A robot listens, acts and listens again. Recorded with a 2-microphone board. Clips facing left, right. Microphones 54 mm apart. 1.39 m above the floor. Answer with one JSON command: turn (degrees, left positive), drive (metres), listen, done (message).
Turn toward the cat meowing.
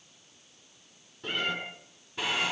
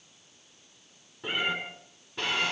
{"turn": -15}
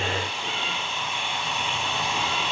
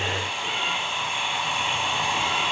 {"listen": true}
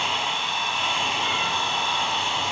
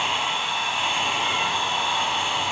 {"listen": true}
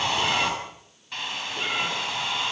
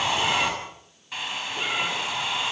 {"done": "I heard a cat meowing, but can't make it out now. It was about straight ahead or 150° right."}